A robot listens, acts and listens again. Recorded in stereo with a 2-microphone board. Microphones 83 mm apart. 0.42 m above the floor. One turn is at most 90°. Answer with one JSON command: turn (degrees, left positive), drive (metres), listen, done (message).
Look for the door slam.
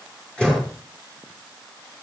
{"turn": 30}
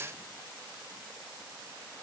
{"listen": true}
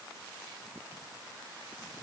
{"done": "I heard a door slam, but can't make it out now. It was about 20° right or 140° left."}